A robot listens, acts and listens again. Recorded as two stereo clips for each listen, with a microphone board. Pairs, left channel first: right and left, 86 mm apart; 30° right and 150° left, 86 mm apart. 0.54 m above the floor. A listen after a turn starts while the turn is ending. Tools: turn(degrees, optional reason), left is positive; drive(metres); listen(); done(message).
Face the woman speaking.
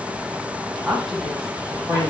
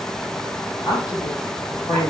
done("Found it: a woman speaking, straight ahead, 2 to 4 m away.")